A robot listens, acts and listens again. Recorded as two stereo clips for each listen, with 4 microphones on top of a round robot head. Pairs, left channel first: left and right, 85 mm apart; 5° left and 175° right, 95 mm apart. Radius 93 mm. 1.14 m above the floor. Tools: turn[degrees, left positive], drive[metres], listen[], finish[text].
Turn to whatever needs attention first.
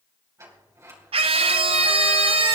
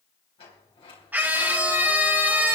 Thought: The scream: 100° right.
Action: turn[-100]
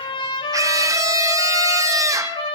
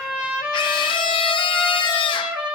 Thought: The scream is now 40° right.
Action: turn[-40]
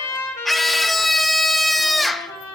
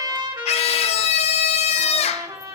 Action: finish[Found it: a scream, straight ahead.]